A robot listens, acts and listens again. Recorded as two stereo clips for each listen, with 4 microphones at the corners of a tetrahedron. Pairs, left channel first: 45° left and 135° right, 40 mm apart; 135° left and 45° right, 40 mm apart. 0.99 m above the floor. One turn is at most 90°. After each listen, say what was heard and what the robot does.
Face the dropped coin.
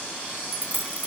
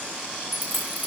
The dropped coin: 85° right. Turn 85° right.
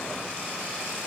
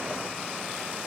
I heard a dropped coin from this way, but can't make it out now.